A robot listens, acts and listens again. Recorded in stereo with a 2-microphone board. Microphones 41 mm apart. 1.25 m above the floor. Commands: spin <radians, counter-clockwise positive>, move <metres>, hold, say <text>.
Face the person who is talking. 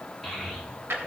spin 0.52
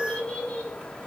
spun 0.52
spin 2.62
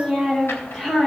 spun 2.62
say Found it: a child speaking, straight ahead, over 4 m away.